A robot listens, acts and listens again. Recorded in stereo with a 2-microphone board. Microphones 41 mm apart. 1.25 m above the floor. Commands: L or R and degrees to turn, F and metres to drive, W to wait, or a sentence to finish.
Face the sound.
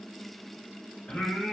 L35
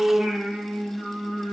L10
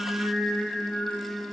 L10
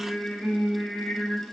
L10
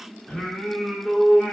Found it: singing, straight ahead, 2 to 4 m away.